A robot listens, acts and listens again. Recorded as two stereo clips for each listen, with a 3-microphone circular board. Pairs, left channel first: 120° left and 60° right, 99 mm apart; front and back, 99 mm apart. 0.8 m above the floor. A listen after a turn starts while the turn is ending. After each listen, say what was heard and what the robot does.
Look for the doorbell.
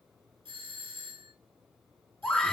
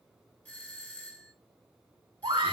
The doorbell: 75° right. Turn 75° right.
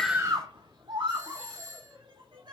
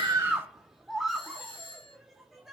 Found it: a doorbell, straight ahead, 2 to 4 m away.